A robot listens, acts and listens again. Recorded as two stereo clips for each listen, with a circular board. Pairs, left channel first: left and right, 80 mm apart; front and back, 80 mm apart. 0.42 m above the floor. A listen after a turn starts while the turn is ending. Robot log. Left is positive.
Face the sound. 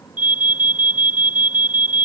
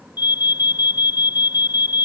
note: The alarm: 20° right.
cmd yaw -20
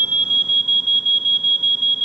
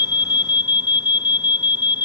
end: Found it: an alarm, straight ahead.